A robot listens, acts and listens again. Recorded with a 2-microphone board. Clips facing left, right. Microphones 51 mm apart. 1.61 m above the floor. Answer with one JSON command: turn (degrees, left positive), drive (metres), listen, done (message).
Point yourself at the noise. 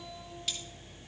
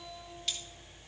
{"turn": 30}
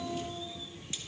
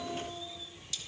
{"listen": true}
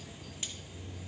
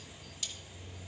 {"listen": true}
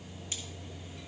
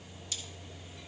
{"done": "I heard cutlery clinking, but can't make it out now. It was about 25° right or 145° left."}